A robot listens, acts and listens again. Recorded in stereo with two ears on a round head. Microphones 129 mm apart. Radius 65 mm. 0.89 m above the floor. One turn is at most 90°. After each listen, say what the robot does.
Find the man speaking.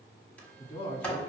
Turn 40° left.
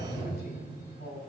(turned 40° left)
Turn 90° left.
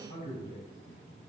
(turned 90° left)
Turn 35° left.
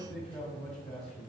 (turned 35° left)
Found it: a man speaking, straight ahead.